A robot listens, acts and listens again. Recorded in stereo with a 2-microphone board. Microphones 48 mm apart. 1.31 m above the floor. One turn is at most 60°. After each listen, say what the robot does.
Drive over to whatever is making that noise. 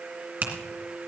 Turn 45° right.
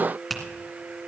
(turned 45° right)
Drive 1.0 m forward.
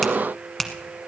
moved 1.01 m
Drive 1.0 m forward.
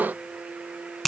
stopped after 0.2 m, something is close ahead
I am next to the finger snap.